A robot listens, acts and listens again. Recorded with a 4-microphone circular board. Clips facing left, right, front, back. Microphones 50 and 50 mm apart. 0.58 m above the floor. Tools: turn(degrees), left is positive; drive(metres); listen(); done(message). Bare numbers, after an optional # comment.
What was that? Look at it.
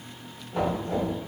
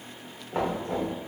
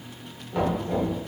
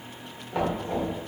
# The knocking: 110° right.
turn(-110)
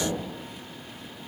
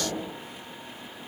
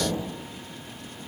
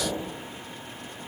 # The knocking is now 30° right.
turn(-30)
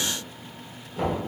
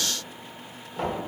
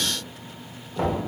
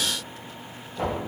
done("Found it: knocking, straight ahead.")